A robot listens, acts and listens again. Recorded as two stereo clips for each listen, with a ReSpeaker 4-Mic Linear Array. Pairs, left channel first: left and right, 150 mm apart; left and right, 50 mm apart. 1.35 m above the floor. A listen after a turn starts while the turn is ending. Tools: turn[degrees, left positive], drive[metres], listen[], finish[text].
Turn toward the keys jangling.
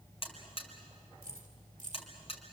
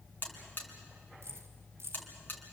Thought: The keys jangling: about 55° right or 125° right.
Action: turn[-55]
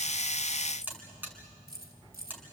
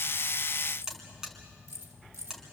Thought: So it is at 85° right.
Action: turn[-85]
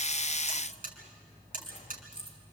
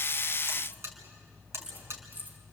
Thought: The keys jangling is now 35° right.
Action: turn[-35]
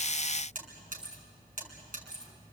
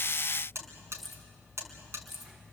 Action: finish[Facing the keys jangling.]